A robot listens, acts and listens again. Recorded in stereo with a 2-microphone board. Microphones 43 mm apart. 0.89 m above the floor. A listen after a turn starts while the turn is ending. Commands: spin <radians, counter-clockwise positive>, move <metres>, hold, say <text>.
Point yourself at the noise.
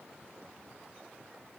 hold
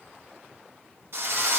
spin -1.13
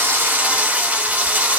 spin -0.70
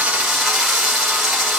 spin -0.17
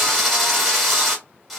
say Found it: a drill, straight ahead, 1 to 2 m away.